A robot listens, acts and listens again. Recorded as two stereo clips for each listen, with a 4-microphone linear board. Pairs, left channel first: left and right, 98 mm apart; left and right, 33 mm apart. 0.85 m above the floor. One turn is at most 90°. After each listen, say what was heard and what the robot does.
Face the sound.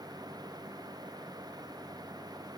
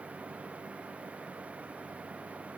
Keep listening.
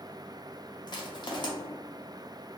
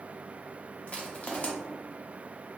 The crushing: about 50° left or 130° left. Turn 50° left.
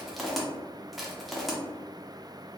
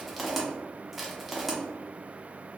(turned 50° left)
Facing the crushing.